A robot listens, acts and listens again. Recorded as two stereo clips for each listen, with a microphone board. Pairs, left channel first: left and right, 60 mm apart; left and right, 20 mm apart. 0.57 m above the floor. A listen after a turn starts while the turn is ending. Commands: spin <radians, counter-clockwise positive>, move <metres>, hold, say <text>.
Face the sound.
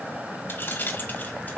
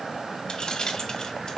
spin 0.61
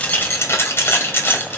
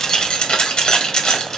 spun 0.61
spin 0.70
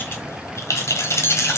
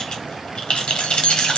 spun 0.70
spin 2.18
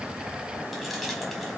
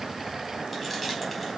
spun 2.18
hold
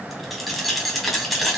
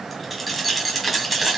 say Facing the keys jangling.